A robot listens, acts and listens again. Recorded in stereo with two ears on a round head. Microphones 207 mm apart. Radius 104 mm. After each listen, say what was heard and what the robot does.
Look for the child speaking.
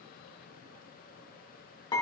Keep listening.
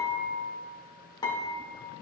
Keep listening.
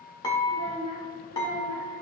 The child speaking: about 15° right or 165° right. Turn 15° right.
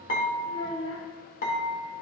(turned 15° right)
So it is at 25° left. Turn 25° left.
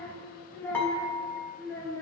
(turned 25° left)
The child speaking is now 10° left. Turn 10° left.
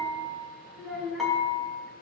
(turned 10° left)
Facing the child speaking.